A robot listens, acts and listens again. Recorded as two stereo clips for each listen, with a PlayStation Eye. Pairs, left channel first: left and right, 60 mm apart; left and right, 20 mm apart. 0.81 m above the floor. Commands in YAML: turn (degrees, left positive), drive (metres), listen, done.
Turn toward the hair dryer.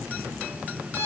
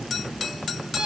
listen: true
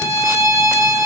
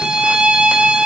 listen: true
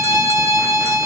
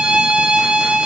done: "I can't make out a hair dryer to turn to."